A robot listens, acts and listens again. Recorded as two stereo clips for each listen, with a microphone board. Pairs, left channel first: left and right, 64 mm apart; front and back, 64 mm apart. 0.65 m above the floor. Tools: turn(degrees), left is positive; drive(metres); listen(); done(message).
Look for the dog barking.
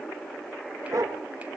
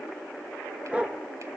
turn(degrees=-110)
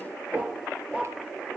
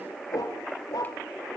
turn(degrees=-20)
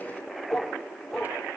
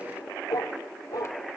done("Found it: a dog barking, straight ahead, over 4 m away.")